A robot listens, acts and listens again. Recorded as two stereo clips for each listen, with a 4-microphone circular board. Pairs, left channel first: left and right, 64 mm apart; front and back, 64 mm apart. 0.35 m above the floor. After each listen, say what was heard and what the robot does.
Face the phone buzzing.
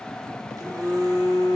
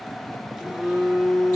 The phone buzzing: 100° right. Turn 100° right.
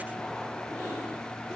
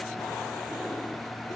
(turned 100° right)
Keep listening.
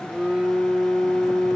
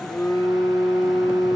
The phone buzzing is now 20° right. Turn 20° right.
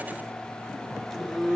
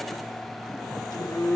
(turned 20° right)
Found it: a phone buzzing, straight ahead.